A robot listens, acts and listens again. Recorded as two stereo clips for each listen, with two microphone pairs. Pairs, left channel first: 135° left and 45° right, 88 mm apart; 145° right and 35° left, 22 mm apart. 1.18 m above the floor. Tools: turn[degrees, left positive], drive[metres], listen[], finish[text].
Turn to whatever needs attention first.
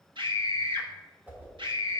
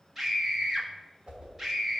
Thought: The scream: 40° right.
Action: turn[-40]
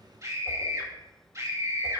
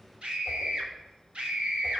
Thought: The scream is now 10° left.
Action: turn[10]
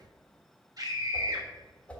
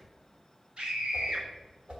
Action: finish[Found it: a scream, straight ahead.]